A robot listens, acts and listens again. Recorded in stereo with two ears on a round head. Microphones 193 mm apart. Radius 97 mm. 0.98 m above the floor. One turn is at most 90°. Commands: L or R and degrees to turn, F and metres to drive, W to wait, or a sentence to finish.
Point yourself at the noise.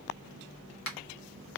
L65
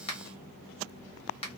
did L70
L30
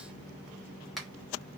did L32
Found it: a finger snap, straight ahead.